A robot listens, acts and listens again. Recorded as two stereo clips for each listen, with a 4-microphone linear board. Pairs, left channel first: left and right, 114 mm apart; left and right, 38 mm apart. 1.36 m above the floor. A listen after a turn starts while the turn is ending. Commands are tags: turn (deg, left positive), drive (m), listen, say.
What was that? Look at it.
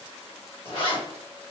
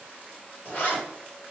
<turn deg="50"/>
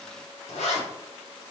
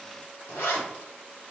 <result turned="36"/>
<turn deg="90"/>
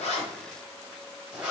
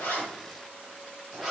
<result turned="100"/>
<turn deg="-10"/>
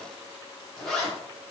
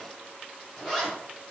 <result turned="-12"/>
<say>Facing the zipper.</say>